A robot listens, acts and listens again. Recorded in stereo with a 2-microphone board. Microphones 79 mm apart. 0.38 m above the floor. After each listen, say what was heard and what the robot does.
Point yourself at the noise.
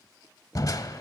The crushing: about 50° left or 130° left. Turn 50° left.
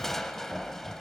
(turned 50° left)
Found it: crushing, straight ahead, under 1 m away.